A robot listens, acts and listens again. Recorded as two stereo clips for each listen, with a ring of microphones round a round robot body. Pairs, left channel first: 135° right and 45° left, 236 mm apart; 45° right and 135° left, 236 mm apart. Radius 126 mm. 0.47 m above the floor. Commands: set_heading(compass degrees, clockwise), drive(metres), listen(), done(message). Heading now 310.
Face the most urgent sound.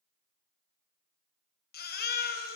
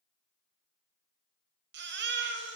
set_heading(135)
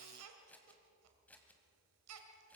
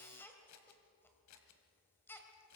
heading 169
set_heading(134)
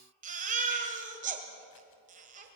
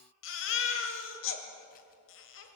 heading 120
set_heading(135)
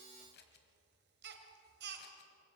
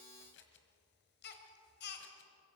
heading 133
done("Facing the baby crying, 2 to 4 m away.")